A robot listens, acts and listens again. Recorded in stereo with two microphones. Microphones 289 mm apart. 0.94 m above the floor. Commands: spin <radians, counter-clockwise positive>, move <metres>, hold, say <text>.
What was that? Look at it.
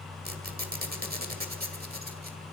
spin -0.52
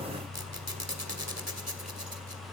spin -2.09
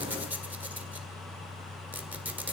say Found it: a squeak, straight ahead, 2 to 4 m away.